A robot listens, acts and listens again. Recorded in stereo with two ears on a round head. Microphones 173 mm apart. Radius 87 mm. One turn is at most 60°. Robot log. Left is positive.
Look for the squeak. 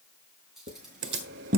note: The squeak: about 45° right or 135° right.
cmd yaw -45
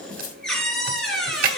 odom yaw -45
end: Found it: a squeak, straight ahead.